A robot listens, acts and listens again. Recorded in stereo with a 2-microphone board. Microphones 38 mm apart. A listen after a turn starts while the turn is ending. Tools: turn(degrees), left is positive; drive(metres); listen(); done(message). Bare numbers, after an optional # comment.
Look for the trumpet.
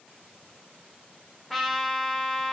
turn(30)
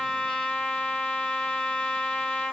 # So it is at 145° left.
turn(145)
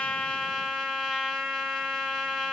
done("Facing the trumpet.")